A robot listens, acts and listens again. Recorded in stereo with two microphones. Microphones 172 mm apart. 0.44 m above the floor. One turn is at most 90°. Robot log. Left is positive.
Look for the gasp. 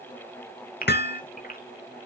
note: The gasp: about 55° left or 125° left.
cmd yaw +55
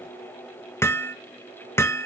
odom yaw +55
cmd idle
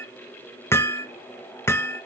end: I heard a gasp, but can't make it out now. It was about straight ahead or 70° left.